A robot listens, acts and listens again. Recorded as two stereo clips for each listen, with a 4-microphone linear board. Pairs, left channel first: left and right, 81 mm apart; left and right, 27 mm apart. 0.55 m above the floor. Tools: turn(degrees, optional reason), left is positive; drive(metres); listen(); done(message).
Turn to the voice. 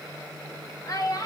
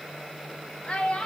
turn(degrees=45, reason="The child speaking: about 45° left or 135° left.")
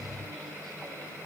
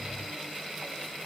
listen()
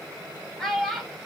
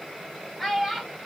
done("Found it: a child speaking, straight ahead, 1 to 2 m away.")